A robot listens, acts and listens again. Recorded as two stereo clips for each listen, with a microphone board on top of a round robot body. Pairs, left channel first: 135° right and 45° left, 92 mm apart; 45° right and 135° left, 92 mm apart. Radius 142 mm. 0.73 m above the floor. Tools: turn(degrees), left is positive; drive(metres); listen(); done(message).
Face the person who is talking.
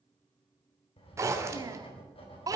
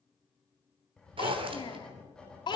done("Facing the child speaking, 1 to 2 m away.")